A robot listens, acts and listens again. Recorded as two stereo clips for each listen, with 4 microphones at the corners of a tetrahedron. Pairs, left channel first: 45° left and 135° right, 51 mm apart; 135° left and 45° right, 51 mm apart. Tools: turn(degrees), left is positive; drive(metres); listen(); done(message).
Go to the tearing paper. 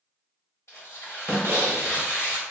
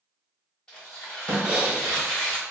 turn(degrees=65)
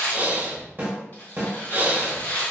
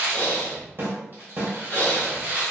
drive(metres=1.0)
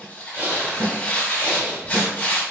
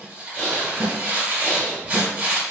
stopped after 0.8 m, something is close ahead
done("Arrived at the tearing paper, straight ahead.")